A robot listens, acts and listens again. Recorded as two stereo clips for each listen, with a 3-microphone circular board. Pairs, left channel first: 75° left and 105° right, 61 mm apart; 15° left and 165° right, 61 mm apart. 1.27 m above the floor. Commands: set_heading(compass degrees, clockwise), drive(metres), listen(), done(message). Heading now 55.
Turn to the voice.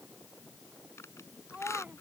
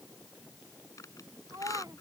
set_heading(230)
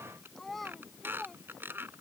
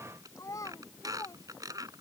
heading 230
set_heading(240)
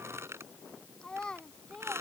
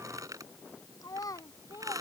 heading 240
done("Facing the child speaking.")